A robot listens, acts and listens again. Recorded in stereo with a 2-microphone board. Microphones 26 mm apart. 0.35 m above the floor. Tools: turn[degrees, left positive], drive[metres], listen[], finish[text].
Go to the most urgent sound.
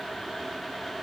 Action: listen[]
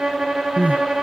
Thought: The crying: about 65° right or 115° right.
Action: turn[-65]
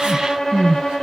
Thought: So it is at 40° right.
Action: turn[-40]
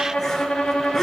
Action: drive[1.0]
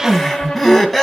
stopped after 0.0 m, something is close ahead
Action: finish[Something is in my way. I am facing the crying but have not reached it.]